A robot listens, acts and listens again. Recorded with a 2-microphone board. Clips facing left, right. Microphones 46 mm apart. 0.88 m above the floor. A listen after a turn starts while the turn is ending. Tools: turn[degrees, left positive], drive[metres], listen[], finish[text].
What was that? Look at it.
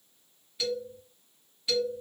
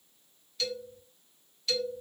Action: turn[30]
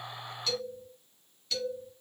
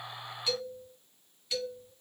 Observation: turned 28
Thought: So it is at 15° right.
Action: turn[-15]
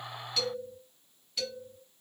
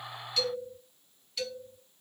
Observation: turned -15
Action: finish[Found it: a man speaking, straight ahead.]